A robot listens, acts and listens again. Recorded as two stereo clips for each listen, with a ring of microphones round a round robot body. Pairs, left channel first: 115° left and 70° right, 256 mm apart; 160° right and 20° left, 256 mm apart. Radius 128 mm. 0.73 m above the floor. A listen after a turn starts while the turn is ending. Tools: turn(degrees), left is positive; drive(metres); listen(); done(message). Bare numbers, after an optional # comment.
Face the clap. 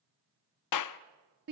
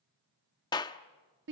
# The clap: 125° left.
turn(125)
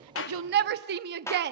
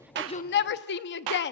# The clap is now 35° left.
turn(35)
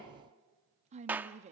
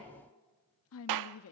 # The clap is now 15° left.
turn(15)
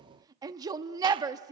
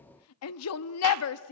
listen()
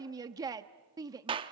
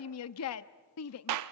done("Facing the clap, under 1 m away.")